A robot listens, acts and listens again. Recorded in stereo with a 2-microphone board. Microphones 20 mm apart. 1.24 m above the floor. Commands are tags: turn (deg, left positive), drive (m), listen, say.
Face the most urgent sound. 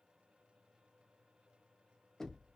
<listen/>
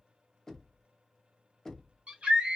<turn deg="-60"/>
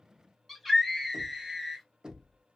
<say>Facing the scream.</say>